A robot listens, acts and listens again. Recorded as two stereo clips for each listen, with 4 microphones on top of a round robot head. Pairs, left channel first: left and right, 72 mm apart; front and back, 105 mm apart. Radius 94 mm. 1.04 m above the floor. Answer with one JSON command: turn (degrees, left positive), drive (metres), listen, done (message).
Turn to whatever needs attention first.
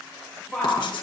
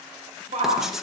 {"turn": 175}
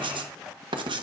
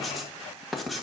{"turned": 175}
{"listen": true}
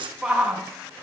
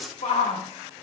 {"turn": -10}
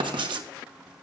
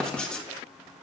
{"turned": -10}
{"listen": true}
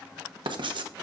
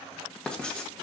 {"listen": true}
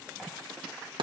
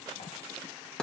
{"done": "I heard a shout from this way, but can't make it out now."}